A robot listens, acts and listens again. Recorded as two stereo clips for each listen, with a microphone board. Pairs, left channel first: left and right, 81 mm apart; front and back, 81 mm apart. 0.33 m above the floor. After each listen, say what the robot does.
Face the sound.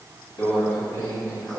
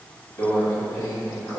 Turn 45° left.
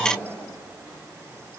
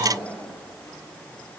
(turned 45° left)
Keep listening.
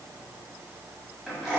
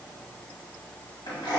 Facing the microwave.